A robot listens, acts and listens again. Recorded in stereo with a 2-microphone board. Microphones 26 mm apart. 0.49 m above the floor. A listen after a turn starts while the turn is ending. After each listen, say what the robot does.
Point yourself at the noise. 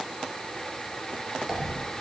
Turn 30° right.
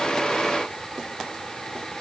Keep listening.
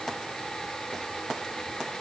I heard a dropped coin, but can't make it out now. It was about 20° left or 140° right.